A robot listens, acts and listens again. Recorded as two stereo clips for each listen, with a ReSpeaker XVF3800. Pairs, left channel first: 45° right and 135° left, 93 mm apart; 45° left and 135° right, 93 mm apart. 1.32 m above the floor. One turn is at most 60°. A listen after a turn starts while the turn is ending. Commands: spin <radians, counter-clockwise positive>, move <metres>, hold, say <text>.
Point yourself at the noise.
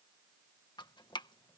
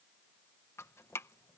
spin -0.26
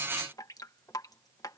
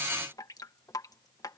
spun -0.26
say Facing the dripping.